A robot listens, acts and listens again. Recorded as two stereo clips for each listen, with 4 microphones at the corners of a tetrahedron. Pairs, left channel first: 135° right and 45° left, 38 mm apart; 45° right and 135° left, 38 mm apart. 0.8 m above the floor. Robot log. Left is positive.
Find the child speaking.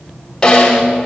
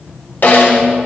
cmd idle
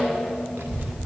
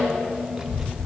note: The child speaking: 55° left.
cmd yaw +55
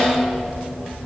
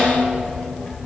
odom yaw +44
note: The child speaking is now 10° left.
cmd yaw +10
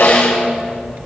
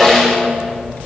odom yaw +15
end: Found it: a child speaking, straight ahead, under 1 m away.